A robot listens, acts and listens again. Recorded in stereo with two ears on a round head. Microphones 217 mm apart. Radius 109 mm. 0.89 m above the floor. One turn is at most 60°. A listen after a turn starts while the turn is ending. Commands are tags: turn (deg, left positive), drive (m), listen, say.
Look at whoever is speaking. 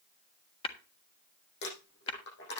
<listen/>
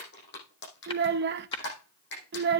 <turn deg="-45"/>
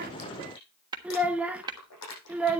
<say>Found it: a child speaking, straight ahead, under 1 m away.</say>